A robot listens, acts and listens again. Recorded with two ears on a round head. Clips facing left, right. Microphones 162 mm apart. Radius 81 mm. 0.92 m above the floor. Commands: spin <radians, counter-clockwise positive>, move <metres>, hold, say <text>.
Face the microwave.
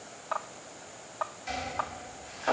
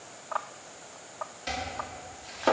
hold
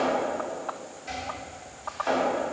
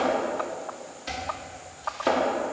hold
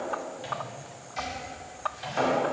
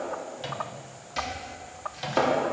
spin -0.96
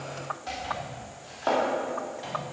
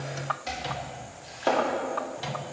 spin -1.22
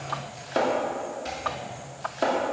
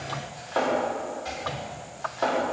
hold
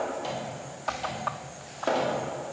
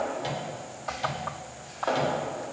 spin -0.17
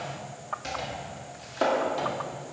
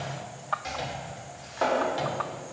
hold
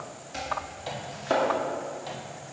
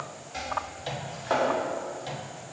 say Found it: a microwave, straight ahead.